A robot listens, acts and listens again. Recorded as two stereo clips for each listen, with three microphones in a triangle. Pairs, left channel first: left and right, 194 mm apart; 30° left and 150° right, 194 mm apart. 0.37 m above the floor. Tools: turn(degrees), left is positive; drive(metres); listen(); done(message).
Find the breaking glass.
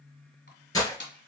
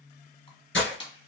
turn(degrees=20)
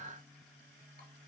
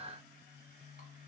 done("Facing where the breaking glass came from. I can't hear it now.")